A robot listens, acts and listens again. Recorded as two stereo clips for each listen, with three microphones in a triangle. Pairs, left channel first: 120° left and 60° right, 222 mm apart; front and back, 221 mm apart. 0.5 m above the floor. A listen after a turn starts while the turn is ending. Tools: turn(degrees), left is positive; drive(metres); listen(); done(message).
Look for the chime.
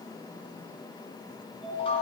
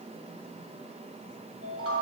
turn(degrees=-175)
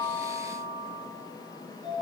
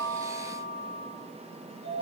done("Facing the chime.")